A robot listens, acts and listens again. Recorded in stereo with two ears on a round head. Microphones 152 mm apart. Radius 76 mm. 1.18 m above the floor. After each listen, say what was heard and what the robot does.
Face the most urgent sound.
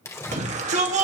The shout: about 40° right or 140° right. Turn 40° right.
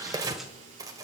Keep listening.
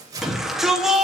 Found it: a shout, straight ahead, 2 to 4 m away.